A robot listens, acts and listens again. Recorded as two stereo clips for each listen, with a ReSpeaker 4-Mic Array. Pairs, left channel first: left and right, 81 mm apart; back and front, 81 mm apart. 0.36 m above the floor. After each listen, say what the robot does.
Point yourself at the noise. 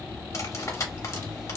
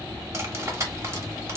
Turn 45° left.
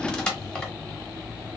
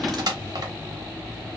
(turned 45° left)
Turn 10° left.
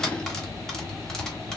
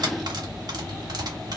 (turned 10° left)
Found it: cutlery clinking, straight ahead, under 1 m away.